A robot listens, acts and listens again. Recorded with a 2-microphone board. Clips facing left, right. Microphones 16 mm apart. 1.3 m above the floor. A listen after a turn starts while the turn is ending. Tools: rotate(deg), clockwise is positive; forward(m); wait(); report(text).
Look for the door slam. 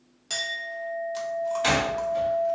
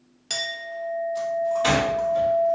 rotate(-15)
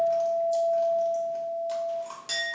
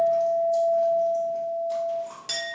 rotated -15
wait()
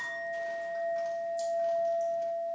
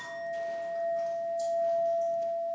report("I heard a door slam, but can't make it out now. It was about straight ahead or 150° left.")